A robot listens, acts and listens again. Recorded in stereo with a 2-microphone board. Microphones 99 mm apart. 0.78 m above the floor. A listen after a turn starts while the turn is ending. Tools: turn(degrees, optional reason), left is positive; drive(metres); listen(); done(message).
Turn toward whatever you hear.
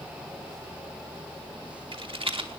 turn(degrees=-65, reason="The rattle: about 65° right or 115° right.")
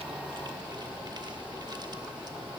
listen()
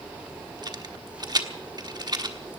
turn(degrees=-45, reason="So it is at 45° right.")
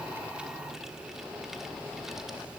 listen()
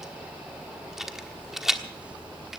done("Found it: a rattle, straight ahead.")